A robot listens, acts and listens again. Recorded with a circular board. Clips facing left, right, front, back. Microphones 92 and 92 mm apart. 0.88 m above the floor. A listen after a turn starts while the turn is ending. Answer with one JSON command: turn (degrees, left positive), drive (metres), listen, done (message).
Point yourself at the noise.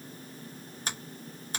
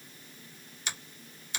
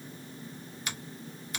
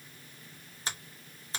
{"turn": 130}
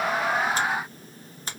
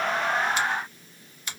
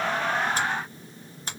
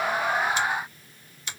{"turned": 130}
{"turn": 45}
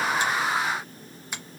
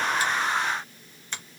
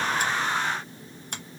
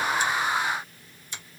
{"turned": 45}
{"turn": 10}
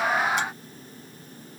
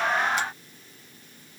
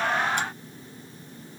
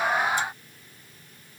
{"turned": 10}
{"listen": true}
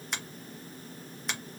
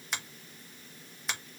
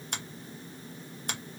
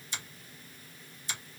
{"done": "Found it: a finger snap, straight ahead."}